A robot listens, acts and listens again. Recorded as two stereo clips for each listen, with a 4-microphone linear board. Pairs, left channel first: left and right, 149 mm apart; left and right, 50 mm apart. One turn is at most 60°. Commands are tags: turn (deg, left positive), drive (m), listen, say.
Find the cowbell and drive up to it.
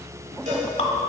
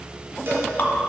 <turn deg="-55"/>
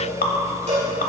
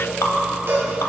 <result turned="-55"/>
<turn deg="-60"/>
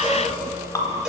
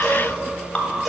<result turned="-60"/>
<listen/>
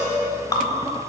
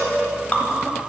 <drive m="1.0"/>
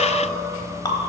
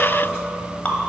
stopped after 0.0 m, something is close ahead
<listen/>
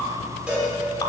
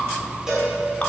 <turn deg="-10"/>
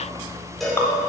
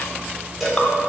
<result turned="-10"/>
<say>Something is in my way. I am facing the cowbell but have not reached it.</say>